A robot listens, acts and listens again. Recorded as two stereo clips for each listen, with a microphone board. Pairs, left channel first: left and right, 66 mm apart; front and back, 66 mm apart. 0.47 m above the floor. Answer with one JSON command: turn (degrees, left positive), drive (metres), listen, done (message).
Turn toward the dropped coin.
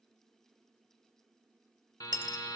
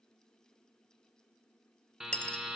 {"turn": -75}
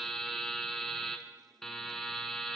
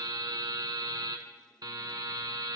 {"done": "I heard a dropped coin from this way, but can't make it out now."}